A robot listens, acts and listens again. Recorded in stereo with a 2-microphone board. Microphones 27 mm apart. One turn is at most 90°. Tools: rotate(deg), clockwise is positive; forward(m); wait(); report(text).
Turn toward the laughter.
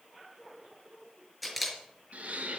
rotate(70)
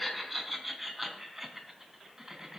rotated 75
rotate(20)
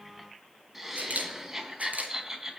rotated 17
rotate(20)
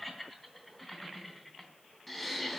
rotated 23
report("Facing the laughter.")